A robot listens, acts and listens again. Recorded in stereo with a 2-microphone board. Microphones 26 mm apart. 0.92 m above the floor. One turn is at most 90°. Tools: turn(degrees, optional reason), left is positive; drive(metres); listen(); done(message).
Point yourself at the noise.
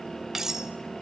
turn(degrees=-15, reason="The cutlery clinking: about 15° right or 165° right.")
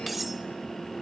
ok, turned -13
done("Found it: cutlery clinking, straight ahead.")